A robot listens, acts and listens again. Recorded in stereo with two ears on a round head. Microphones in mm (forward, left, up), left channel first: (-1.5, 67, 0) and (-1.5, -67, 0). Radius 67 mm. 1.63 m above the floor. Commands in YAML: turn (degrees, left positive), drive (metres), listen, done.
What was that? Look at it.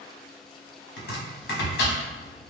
turn: 90
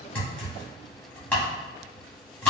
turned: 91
turn: 10
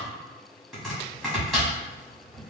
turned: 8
done: "Found it: chopping, straight ahead."